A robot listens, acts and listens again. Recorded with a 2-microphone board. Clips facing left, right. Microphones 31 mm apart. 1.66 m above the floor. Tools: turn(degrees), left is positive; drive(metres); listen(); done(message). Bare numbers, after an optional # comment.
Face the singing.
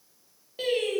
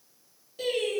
# The singing: about 40° left or 140° left.
turn(40)
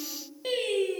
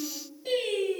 # So it is at 105° left.
turn(105)
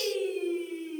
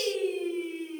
# The singing is now 55° right.
turn(-55)
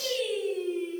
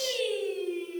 # The singing is now 20° right.
turn(-20)
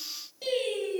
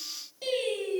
done("Found it: singing, straight ahead.")